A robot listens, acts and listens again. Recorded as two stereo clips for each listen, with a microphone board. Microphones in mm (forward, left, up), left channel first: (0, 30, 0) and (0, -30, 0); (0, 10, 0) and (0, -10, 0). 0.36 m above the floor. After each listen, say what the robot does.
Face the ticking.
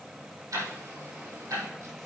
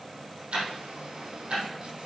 Turn 65° right.
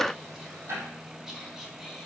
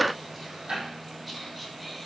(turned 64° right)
Turn 50° right.
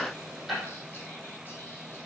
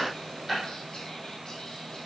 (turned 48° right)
Found it: ticking, straight ahead, over 4 m away.